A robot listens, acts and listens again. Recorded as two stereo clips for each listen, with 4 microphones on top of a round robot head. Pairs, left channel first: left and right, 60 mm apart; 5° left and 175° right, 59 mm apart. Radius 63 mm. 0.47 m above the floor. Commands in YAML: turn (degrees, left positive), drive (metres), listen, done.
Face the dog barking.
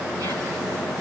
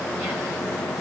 listen: true
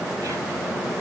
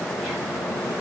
listen: true
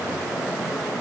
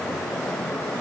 done: "I can't make out a dog barking to turn to."